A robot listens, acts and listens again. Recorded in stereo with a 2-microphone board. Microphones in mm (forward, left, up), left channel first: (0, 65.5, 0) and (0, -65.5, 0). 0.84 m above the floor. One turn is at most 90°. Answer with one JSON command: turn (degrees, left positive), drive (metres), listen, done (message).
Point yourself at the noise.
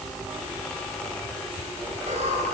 {"turn": -65}
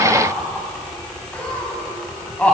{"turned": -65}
{"turn": 10}
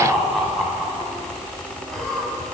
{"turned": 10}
{"done": "Facing the laughter."}